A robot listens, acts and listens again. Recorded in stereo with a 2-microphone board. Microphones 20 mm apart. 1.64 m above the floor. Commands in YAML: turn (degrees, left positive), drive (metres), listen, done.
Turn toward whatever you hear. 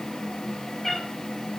turn: 25
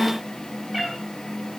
turn: -10
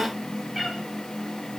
done: "Found it: a cat meowing, straight ahead."